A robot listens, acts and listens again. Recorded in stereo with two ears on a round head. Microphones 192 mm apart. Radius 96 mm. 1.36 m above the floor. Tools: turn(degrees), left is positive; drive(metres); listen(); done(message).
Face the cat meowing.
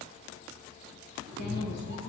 turn(degrees=-40)
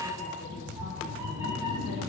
turn(degrees=-20)
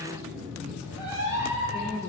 turn(degrees=-15)
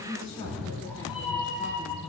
done("Facing the cat meowing, over 4 m away.")